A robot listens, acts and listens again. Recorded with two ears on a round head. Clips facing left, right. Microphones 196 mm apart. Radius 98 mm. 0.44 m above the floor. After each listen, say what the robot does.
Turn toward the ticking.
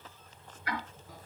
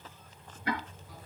Turn 25° right.
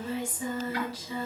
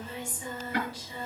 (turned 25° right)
Turn 130° right.
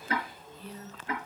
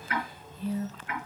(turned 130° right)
Turn 30° left.
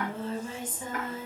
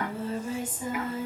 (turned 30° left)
Keep listening.
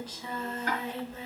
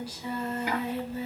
Turn 10° right.
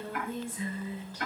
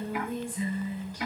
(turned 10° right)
Facing the ticking, over 4 m away.